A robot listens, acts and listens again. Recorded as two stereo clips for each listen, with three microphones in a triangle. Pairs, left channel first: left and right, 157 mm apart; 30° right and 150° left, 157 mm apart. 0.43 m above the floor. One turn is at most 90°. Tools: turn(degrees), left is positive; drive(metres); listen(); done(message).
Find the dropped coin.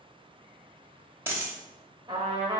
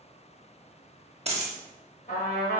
turn(degrees=-90)
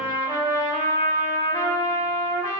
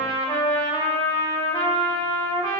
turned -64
turn(degrees=-90)
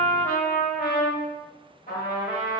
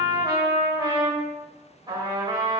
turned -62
turn(degrees=-35)
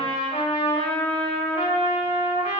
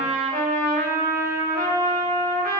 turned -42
done("I heard a dropped coin from this way, but can't make it out now.")